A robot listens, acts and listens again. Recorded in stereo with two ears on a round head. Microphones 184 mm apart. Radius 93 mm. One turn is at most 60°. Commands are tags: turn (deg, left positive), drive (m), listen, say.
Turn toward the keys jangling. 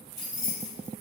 <turn deg="20"/>
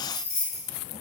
<turn deg="60"/>
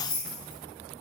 <turn deg="55"/>
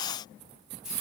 <say>Facing the keys jangling, 1 to 2 m away.</say>